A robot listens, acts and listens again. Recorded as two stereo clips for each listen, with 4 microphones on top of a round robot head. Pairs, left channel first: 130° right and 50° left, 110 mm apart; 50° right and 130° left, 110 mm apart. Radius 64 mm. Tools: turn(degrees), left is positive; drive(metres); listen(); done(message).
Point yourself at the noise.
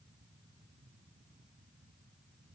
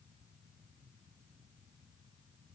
listen()
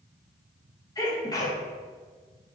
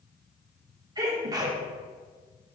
turn(degrees=180)
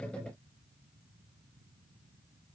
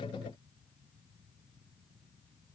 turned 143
turn(degrees=35)
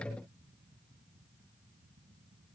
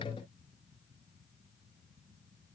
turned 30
done("Facing where the sneeze came from. I can't hear it now.")